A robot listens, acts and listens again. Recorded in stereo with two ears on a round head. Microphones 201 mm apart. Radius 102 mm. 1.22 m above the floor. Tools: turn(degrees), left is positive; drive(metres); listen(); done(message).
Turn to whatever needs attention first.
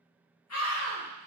turn(degrees=90)
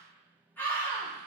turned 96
turn(degrees=10)
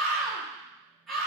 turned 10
done("Facing the scream, 2 to 4 m away.")